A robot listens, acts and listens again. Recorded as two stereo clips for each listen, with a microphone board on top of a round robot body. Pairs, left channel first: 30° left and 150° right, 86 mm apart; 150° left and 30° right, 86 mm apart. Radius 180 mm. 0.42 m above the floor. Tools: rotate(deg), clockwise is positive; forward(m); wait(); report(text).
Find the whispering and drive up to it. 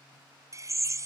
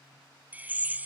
wait()
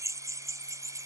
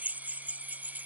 wait()
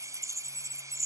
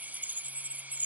report("I can't make out whispering to turn to.")